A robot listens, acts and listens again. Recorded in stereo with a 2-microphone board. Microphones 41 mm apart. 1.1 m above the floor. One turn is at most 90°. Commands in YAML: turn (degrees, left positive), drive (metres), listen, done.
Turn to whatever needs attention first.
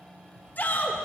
turn: 45
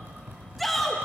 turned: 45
done: "Found it: a shout, straight ahead."